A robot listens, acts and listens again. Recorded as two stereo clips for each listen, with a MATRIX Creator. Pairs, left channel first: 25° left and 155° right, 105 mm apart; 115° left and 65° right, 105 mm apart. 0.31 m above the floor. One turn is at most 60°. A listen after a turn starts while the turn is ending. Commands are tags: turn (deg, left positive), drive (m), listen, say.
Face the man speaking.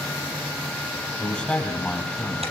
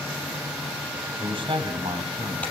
<turn deg="-55"/>
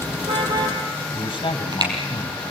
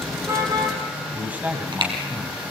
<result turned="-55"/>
<say>Found it: a man speaking, straight ahead, 2 to 4 m away.</say>